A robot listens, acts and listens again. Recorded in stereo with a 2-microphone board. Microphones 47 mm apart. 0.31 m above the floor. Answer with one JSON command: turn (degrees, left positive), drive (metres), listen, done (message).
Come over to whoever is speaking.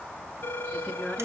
{"turn": -20}
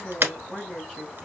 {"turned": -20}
{"drive": 1.0}
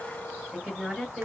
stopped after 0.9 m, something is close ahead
{"done": "Something is in my way. I am facing the woman speaking but have not reached it."}